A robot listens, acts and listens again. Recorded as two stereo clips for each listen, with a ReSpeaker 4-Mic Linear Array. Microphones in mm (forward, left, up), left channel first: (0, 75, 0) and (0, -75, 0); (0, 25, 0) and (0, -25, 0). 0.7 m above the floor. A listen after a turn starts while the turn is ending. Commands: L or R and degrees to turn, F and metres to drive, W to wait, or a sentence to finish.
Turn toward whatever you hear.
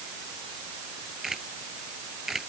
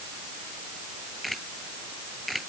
L30
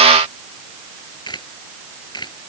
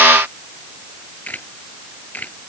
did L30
L150
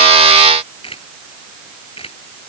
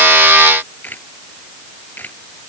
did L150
L35
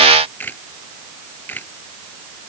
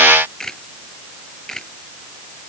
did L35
L10
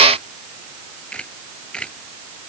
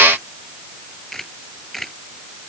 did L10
Facing the camera shutter.